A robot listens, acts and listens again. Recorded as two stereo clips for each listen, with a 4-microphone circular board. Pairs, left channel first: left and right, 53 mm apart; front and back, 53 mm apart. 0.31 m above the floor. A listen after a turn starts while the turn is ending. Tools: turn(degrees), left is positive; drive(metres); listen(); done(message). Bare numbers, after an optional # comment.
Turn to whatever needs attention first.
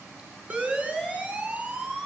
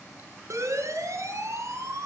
# The siren: 155° right.
turn(-155)
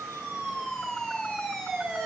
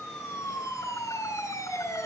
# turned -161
# The siren is now 10° left.
turn(10)
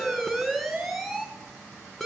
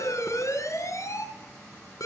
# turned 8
done("Found it: a siren, straight ahead, over 4 m away.")